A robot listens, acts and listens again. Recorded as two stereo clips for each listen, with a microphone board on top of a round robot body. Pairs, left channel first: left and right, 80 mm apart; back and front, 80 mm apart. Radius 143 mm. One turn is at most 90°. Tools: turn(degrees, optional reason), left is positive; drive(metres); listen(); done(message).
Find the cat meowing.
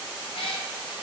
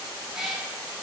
turn(degrees=80, reason="The cat meowing: 80° left.")
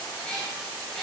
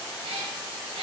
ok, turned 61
done("Found it: a cat meowing, straight ahead.")